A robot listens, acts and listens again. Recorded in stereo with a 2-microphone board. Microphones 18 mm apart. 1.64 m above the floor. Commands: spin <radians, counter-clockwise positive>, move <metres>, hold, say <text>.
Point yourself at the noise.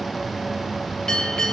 spin 0.70
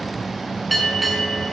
say Found it: a bell, straight ahead.